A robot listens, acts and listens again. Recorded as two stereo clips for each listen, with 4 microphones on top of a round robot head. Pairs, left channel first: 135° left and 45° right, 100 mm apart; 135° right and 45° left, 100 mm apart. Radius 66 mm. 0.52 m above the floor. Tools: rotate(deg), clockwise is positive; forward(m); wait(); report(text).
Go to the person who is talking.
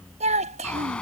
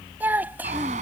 rotate(30)
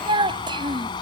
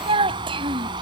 forward(1.0)
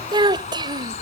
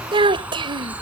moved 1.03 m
forward(1.0)
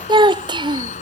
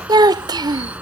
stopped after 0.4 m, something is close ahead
report("I am next to the child speaking.")